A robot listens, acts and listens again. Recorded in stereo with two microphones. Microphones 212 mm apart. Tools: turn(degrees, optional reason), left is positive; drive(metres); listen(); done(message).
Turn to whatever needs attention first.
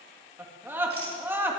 turn(degrees=-30)
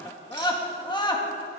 turn(degrees=20, reason="So it is at 20° left.")
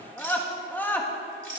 turn(degrees=10, reason="The scream is now 10° left.")
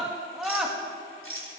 done("Facing the scream, 1 to 2 m away.")